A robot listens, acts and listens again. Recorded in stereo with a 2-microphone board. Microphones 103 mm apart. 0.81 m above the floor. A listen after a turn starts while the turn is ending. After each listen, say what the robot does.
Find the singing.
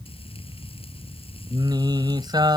Turn 45° right.
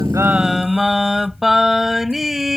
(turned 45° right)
Facing the singing.